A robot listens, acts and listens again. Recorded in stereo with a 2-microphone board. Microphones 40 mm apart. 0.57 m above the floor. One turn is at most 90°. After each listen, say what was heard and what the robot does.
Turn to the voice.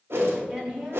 The woman speaking: about 25° right or 155° right. Turn 25° right.
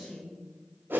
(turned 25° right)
Found it: a woman speaking, straight ahead.